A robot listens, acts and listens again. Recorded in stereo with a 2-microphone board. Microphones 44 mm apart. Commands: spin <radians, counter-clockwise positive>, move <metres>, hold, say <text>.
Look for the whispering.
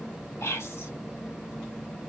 spin 1.57
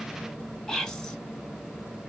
spin 0.17
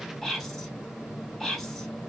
say Found it: whispering, straight ahead, 2 to 4 m away.